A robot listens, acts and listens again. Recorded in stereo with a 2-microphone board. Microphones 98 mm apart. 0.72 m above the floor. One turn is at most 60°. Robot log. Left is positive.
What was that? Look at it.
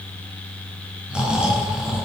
cmd yaw -30
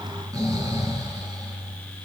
note: So it is at 140° right.
cmd yaw -60
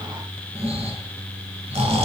note: The snoring is now 85° right.
cmd yaw -60
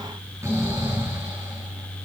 note: The snoring is now 30° right.
cmd yaw -30
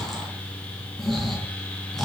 end: Found it: snoring, straight ahead.